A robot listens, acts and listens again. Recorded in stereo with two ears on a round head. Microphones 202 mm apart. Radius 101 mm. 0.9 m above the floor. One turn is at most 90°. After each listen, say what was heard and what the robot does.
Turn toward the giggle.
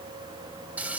Keep listening.
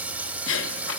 The giggle: about 60° left or 120° left. Turn 60° left.
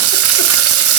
Keep listening.
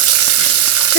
Keep listening.
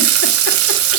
I heard a giggle, but can't make it out now. It was about straight ahead or 60° left.